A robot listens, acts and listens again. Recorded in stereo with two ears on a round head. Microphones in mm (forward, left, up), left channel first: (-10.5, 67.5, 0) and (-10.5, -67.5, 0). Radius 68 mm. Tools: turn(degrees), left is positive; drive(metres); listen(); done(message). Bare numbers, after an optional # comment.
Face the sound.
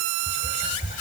# The whispering: about 50° left or 130° left.
turn(50)
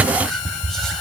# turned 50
done("Facing the whispering, 2 to 4 m away.")